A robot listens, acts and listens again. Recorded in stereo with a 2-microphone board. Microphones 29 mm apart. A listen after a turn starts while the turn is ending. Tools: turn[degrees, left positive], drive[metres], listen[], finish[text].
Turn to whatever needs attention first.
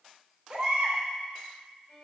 Thought: The baby crying: about 30° right or 150° right.
Action: turn[-30]
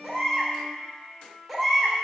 Action: finish[Facing the baby crying, 2 to 4 m away.]